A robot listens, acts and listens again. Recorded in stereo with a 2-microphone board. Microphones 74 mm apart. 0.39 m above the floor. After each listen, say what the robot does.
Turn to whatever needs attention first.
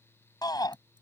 Turn 65° left.
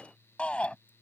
Turn 15° left.
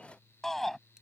Found it: a shout, straight ahead.